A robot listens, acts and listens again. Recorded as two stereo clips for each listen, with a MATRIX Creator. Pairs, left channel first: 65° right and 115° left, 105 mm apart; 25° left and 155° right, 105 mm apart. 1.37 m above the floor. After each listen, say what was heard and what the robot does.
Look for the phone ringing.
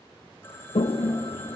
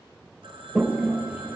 The phone ringing: 135° right. Turn 135° right.
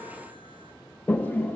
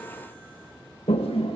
Keep listening.
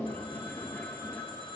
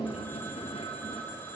The phone ringing is now 45° right. Turn 45° right.
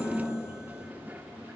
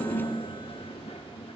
Keep listening.
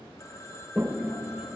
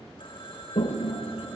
The phone ringing is now 10° right. Turn 10° right.
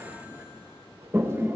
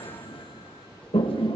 Keep listening.
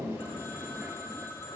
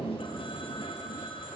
Facing the phone ringing, 2 to 4 m away.